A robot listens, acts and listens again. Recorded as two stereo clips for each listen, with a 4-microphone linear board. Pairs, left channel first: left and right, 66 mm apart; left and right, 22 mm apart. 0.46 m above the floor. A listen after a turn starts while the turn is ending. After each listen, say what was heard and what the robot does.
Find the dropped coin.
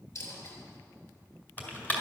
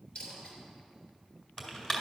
The dropped coin: about 50° left or 130° left. Turn 50° left.
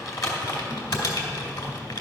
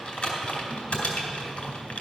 Keep listening.
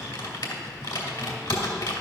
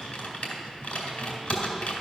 I heard a dropped coin, but can't make it out now. It was about straight ahead or 80° left.